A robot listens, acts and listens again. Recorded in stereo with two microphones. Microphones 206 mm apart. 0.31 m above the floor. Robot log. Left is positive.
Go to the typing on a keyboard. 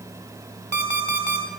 cmd idle
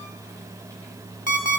cmd idle
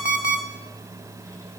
end: I can't make out typing on a keyboard to turn to.